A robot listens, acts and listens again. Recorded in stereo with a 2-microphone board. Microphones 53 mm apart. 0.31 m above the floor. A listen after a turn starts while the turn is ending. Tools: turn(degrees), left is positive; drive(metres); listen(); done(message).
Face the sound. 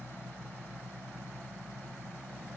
listen()
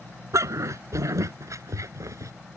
turn(degrees=-90)
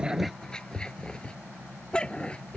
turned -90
turn(degrees=20)
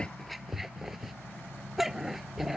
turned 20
done("Found it: a dog barking, straight ahead.")